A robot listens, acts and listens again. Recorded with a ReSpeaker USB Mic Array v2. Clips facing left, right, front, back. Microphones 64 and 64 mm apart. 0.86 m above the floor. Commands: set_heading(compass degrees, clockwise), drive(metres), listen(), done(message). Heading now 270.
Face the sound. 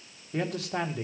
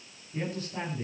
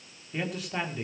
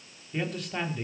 set_heading(185)
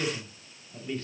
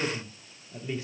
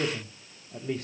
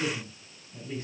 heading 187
set_heading(202)
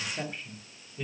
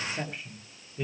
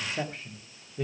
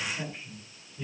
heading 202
set_heading(212)
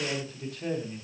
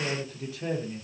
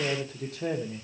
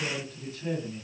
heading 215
done("Found it: a man speaking, straight ahead, 2 to 4 m away.")